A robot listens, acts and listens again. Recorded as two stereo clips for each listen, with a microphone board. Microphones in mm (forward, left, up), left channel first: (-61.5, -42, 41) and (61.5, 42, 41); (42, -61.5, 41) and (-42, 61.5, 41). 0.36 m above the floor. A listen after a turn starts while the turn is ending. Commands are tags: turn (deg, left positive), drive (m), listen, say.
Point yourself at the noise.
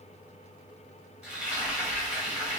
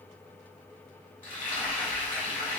<turn deg="-45"/>
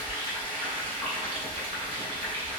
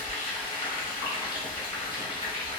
<say>Found it: frying, straight ahead, 1 to 2 m away.</say>